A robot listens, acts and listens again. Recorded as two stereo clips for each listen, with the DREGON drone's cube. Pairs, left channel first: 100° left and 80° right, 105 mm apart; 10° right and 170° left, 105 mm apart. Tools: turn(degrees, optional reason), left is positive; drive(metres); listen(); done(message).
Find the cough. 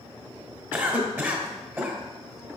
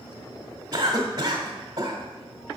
turn(degrees=-150, reason="The cough: 150° right.")
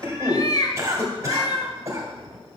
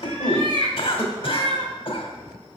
turn(degrees=-20, reason="The cough is now 20° right.")
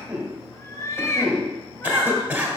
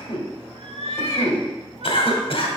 done("Facing the cough, 1 to 2 m away.")